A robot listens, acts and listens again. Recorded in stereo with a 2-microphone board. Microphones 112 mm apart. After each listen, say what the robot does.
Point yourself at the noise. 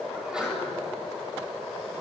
Turn 30° right.
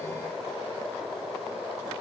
Keep listening.
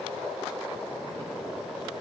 I heard a sneeze, but can't make it out now. It was about 25° left or 145° right.